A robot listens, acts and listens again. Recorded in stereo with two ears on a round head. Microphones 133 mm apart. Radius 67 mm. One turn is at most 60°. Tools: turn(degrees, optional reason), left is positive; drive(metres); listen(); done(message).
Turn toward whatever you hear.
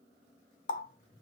turn(degrees=60, reason="The running tap: about 60° left or 120° left.")
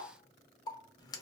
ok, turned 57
turn(degrees=30, reason="So it is at 30° left.")
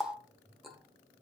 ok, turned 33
done("Facing the running tap, under 1 m away.")